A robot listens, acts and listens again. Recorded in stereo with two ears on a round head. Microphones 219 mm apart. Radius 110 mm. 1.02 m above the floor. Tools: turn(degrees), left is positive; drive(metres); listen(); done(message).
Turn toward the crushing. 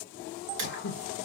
listen()
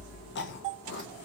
listen()
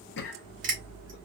turn(degrees=-35)
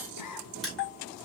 done("Found it: crushing, straight ahead, 2 to 4 m away.")